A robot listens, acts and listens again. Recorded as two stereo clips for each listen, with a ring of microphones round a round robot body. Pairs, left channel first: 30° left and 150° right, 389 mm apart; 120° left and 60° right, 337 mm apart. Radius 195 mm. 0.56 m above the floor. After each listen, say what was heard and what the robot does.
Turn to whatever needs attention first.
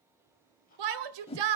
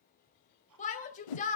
The shout: 170° right. Turn 170° right.
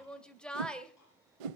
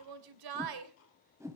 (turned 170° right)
The shout is now 60° right. Turn 60° right.
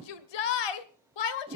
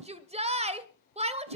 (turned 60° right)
The shout is now 10° left. Turn 10° left.
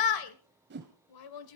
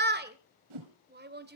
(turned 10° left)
Facing the shout, 2 to 4 m away.